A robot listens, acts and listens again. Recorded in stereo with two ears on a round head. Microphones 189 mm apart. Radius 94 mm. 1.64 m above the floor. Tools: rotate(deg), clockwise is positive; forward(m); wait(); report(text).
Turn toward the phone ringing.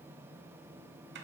wait()
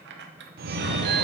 rotate(45)
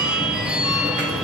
report("Found it: a phone ringing, straight ahead, under 1 m away.")